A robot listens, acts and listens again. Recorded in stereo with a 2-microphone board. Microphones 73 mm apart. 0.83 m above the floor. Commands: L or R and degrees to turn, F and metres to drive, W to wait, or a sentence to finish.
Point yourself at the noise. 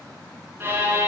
R30
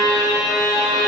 R120
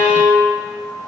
R25
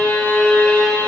L20
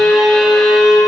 Found it: a violin, straight ahead.